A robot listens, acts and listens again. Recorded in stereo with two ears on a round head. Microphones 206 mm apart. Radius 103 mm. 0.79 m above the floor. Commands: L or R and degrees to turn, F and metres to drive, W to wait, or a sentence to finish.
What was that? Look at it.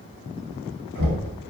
R40
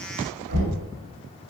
R100
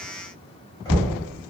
L15
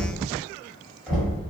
Found it: knocking, straight ahead.